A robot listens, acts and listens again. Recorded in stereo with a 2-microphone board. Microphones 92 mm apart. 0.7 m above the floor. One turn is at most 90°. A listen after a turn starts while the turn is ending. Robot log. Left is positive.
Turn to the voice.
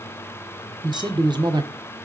note: The man speaking: about 50° right or 130° right.
cmd yaw -50
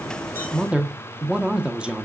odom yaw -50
note: So it is at 10° right.
cmd yaw -10
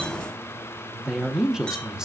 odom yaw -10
end: Found it: a man speaking, straight ahead, under 1 m away.